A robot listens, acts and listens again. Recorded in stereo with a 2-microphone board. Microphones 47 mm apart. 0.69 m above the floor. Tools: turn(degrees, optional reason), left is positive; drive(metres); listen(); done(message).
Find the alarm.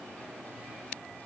listen()
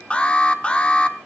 turn(degrees=25, reason="The alarm: about 25° left or 155° left.")
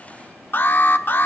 turn(degrees=130, reason="So it is at 130° left.")
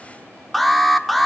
done("Facing the alarm.")